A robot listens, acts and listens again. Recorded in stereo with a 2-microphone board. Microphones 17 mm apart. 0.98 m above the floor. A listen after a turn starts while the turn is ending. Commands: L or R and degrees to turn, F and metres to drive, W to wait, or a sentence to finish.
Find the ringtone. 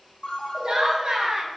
L50
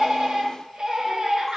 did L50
W
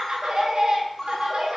Found it: a ringtone, straight ahead, 1 to 2 m away.